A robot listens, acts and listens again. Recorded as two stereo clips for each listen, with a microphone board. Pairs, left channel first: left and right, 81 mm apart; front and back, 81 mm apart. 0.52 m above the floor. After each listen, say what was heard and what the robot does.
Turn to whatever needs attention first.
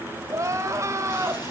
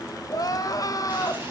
The crying: 40° right. Turn 40° right.
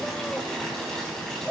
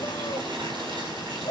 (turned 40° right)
The crying is now 15° left. Turn 15° left.
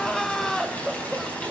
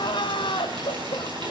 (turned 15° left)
Facing the crying.